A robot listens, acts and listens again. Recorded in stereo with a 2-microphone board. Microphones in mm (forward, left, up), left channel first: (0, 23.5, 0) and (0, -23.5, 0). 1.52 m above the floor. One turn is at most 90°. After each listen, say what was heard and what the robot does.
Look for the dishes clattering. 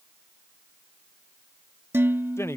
The dishes clattering: about 60° right or 120° right. Turn 60° right.
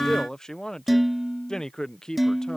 Facing the dishes clattering.